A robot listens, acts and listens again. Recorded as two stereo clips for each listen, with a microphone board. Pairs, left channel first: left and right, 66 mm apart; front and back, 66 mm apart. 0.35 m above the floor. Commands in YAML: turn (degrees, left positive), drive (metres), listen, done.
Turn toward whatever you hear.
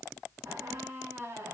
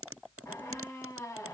turn: -40
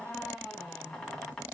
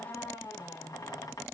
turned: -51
turn: 10
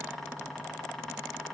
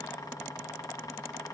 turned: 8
done: "Facing the squeak."